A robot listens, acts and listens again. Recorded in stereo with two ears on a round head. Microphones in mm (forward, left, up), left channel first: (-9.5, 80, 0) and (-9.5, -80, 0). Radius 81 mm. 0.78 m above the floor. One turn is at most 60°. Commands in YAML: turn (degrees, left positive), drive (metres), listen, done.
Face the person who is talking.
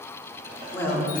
turn: 30
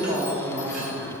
turn: -15
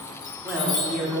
done: "Facing the woman speaking, 2 to 4 m away."